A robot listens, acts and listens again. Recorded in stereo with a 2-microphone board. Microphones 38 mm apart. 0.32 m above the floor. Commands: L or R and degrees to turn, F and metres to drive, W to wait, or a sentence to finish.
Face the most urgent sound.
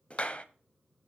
W
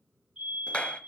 R15
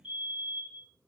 R150
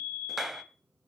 L50
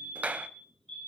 L15
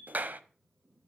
Found it: a fire alarm, straight ahead.